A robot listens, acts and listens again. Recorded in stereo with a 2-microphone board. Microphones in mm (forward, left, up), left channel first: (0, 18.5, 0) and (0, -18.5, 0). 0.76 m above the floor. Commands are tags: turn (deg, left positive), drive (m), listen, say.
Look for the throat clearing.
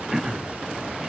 <turn deg="-30"/>
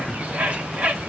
<listen/>
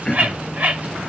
<turn deg="20"/>
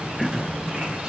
<say>Facing the throat clearing, under 1 m away.</say>